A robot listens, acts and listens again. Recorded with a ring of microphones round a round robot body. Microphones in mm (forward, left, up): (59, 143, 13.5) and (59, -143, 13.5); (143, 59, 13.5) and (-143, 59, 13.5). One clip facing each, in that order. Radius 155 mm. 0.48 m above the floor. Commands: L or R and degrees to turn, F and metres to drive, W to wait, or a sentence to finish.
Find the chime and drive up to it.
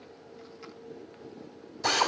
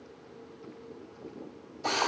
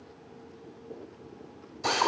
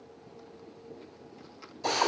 W
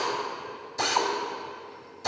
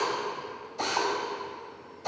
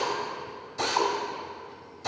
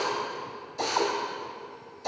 W
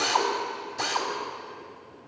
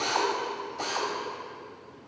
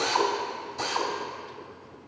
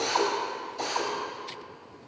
I can't make out a chime to turn to.